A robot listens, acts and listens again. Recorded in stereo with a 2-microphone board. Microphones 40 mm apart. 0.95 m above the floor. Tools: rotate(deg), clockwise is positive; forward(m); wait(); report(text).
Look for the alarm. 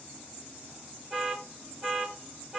rotate(30)
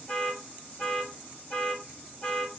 rotate(-20)
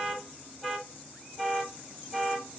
report("Found it: an alarm, straight ahead.")